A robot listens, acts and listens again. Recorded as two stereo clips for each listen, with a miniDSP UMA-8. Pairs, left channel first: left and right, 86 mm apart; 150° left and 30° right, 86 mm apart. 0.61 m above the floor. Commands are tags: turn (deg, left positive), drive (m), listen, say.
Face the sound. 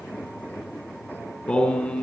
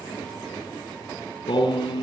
<turn deg="165"/>
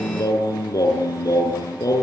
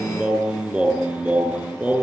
<turn deg="40"/>
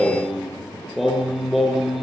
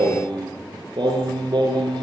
<say>Facing the singing, over 4 m away.</say>